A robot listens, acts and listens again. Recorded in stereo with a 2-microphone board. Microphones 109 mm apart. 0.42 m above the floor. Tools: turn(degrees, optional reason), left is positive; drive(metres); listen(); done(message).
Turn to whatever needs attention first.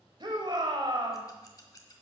turn(degrees=-45, reason="The shout: about 45° right or 135° right.")
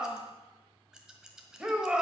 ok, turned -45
turn(degrees=-10, reason="So it is at 10° right.")
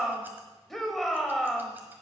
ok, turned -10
done("Facing the shout.")